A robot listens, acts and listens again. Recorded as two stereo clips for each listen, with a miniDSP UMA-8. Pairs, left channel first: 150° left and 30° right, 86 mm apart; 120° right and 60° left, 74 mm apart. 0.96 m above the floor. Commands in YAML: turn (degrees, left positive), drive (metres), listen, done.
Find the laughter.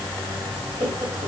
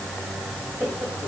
turn: -10
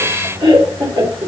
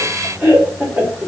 turn: -10
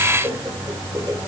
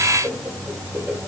done: "Found it: laughter, straight ahead, 2 to 4 m away."